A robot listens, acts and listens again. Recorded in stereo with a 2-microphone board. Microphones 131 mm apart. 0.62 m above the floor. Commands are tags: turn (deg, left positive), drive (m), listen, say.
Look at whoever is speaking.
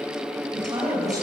<turn deg="-30"/>
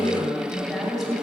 <say>Found it: a woman speaking, straight ahead, 2 to 4 m away.</say>